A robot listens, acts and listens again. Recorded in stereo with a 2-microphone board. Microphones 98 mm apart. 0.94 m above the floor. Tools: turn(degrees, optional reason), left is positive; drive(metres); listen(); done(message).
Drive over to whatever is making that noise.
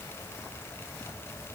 listen()
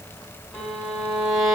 turn(degrees=30)
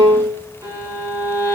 turn(degrees=-35, reason="So it is at 35° right.")
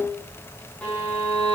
turn(degrees=15, reason="The violin is now 15° left.")
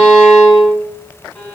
drive(metres=1.0)
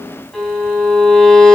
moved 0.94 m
drive(metres=1.0)
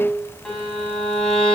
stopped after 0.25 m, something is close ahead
turn(degrees=10, reason="The violin is now 10° left.")
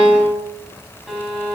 done("Something is in my way. I am facing the violin but have not reached it.")